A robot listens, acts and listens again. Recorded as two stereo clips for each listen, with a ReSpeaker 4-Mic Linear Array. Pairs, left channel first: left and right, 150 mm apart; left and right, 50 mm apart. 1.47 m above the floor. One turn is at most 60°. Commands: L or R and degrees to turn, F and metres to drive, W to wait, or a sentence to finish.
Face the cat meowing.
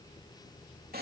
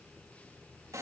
W
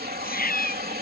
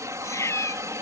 L60
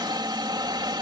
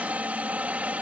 W
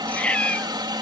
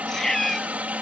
Found it: a cat meowing, straight ahead.